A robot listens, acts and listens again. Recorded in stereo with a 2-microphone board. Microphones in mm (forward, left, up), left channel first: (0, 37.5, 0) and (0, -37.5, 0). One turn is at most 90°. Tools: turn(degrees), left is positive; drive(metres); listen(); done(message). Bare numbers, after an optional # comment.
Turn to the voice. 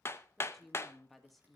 turn(30)
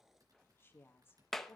# So it is at 145° left.
turn(90)
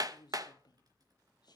# The woman speaking is now 85° left.
turn(85)
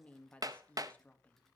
# The woman speaking is now 20° left.
turn(20)
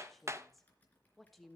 done("Facing the woman speaking.")